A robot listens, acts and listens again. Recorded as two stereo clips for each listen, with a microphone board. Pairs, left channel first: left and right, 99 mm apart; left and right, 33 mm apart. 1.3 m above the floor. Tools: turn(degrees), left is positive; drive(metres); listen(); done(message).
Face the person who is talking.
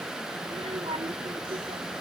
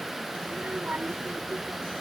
turn(degrees=-90)
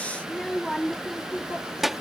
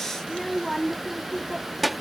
done("Found it: a child speaking, straight ahead.")